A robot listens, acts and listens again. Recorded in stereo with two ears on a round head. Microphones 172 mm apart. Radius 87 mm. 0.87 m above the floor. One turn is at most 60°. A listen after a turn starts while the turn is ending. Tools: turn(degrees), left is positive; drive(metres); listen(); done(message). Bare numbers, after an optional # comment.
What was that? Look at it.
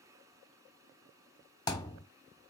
# The thud: about 20° left or 160° left.
turn(20)
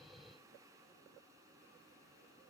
listen()
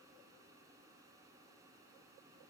done("I heard a thud, but can't make it out now. It was about straight ahead or 140° left.")